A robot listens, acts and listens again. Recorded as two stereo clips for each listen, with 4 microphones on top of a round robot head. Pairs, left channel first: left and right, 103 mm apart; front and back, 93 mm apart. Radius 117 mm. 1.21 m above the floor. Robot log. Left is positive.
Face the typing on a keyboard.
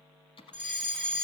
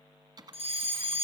note: The typing on a keyboard: 130° left.
cmd yaw +130
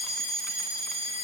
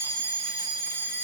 cmd idle
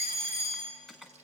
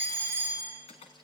end: Facing the typing on a keyboard, 1 to 2 m away.